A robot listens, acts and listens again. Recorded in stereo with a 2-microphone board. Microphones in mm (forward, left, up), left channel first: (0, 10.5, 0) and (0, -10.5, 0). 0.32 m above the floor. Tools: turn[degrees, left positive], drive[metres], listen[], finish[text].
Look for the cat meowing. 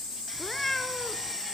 Action: turn[30]
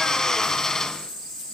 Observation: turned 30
Action: listen[]
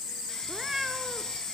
Thought: So it is at 15° right.
Action: turn[-15]
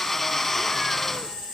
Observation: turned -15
Action: listen[]
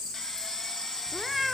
Action: finish[Facing the cat meowing, 1 to 2 m away.]